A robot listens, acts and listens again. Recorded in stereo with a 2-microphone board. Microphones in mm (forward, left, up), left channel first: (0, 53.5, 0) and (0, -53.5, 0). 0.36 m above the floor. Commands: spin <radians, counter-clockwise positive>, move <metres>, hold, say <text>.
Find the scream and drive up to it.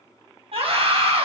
spin -1.13
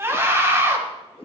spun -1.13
spin -0.44
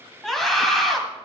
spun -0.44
move 1.0
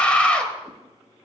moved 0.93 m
spin 0.17
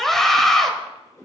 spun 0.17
move 1.0
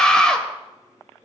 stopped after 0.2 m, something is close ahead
spin 0.17
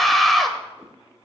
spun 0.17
say Arrived at the scream, straight ahead.